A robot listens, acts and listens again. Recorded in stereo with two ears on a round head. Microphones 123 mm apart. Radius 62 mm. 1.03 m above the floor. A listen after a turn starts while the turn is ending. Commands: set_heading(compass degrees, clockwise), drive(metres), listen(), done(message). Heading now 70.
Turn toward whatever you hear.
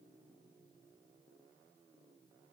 listen()
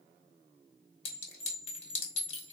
set_heading(25)
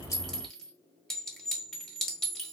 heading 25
done("Found it: a clink, straight ahead.")